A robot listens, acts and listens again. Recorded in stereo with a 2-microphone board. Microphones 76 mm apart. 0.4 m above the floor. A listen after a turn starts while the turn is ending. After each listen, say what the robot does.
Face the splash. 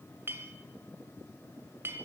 Keep listening.
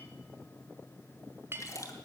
Turn 40° left.
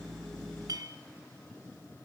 Keep listening.
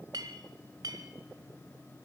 I heard a splash, but can't make it out now. It was about straight ahead or 100° left.